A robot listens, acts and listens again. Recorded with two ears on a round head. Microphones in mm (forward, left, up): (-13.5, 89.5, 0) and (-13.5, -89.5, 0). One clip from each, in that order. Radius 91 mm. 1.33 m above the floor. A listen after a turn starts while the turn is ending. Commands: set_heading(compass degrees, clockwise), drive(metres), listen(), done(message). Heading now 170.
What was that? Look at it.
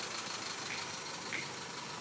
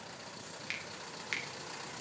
set_heading(260)
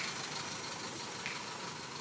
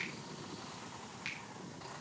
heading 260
listen()
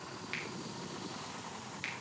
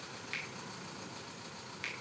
done("Facing the finger snap.")